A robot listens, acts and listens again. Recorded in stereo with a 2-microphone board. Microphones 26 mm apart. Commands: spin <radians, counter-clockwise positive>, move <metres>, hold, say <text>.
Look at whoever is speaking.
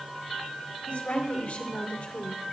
spin 1.57
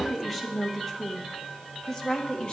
spin 0.61
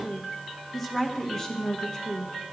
spin 0.44
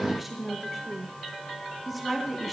say Found it: a woman speaking, straight ahead.